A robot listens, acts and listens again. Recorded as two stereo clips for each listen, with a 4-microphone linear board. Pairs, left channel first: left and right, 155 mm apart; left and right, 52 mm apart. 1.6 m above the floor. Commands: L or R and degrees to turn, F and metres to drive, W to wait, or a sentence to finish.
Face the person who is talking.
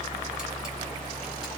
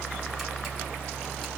W
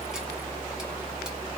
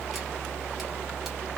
W
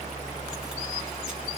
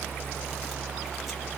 I can't make out anyone speaking to turn to.